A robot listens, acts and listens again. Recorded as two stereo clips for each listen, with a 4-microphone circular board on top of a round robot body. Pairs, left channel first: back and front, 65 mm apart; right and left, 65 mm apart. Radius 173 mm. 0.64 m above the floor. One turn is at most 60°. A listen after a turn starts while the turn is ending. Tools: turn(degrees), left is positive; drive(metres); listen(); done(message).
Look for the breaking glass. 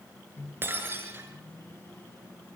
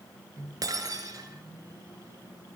turn(degrees=60)
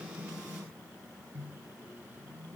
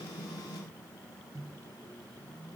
done("I heard breaking glass from this way, but can't make it out now.")